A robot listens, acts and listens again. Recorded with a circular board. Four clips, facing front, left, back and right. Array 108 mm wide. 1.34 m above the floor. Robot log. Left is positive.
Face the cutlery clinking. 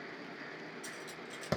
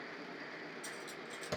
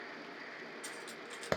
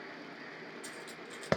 note: The cutlery clinking: 150° right.
cmd yaw -150
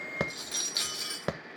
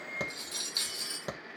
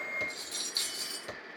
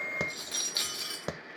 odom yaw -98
note: The cutlery clinking is now 50° right.
cmd yaw -50
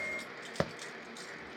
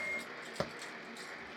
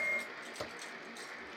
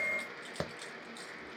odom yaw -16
note: Nothing new. It was at 35° right.
cmd yaw -35
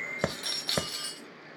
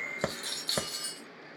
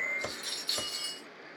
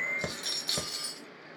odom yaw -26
note: The cutlery clinking is now 10° right.
cmd yaw -10
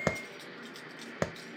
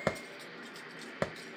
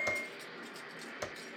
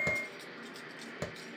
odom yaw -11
cmd idle
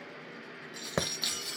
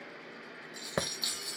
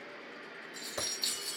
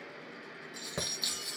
end: Found it: cutlery clinking, straight ahead, 1 to 2 m away.